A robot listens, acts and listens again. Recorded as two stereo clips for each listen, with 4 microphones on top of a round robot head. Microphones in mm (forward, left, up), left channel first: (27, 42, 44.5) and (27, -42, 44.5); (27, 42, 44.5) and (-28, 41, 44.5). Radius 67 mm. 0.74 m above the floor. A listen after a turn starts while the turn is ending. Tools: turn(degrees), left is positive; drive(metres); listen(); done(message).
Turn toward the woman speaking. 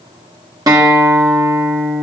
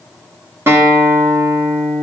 listen()
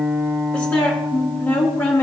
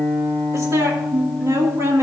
turn(degrees=150)
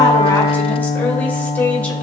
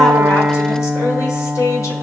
turn(degrees=15)
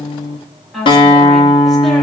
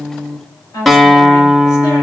done("Facing the woman speaking.")